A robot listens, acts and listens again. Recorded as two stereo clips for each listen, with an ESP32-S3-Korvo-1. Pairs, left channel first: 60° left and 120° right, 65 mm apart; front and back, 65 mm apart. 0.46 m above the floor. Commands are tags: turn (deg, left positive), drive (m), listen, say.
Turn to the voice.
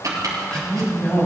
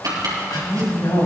<say>Found it: a woman speaking, straight ahead.</say>